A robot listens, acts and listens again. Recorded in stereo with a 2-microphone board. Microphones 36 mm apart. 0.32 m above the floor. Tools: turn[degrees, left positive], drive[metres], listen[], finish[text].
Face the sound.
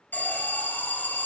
Thought: The alarm: about 60° left or 120° left.
Action: turn[60]
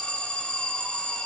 Thought: So it is at 40° left.
Action: turn[40]
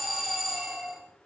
Action: finish[Found it: an alarm, straight ahead.]